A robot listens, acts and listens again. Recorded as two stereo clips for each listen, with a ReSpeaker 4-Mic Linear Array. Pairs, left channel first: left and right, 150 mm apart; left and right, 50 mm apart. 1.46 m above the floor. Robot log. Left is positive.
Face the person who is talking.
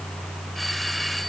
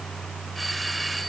cmd idle
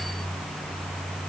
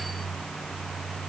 cmd idle
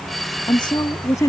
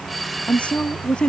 note: The woman speaking: about 20° left or 160° left.
cmd yaw +20
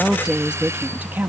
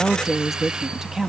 note: So it is at 15° right.
cmd yaw -15
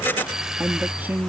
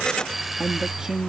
note: The woman speaking is now 15° right.
cmd yaw -15
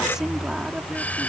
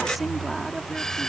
end: Facing the woman speaking.